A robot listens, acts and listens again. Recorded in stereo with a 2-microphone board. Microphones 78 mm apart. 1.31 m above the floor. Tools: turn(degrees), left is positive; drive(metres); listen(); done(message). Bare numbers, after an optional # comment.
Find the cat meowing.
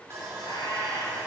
turn(90)
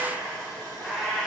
done("Facing the cat meowing.")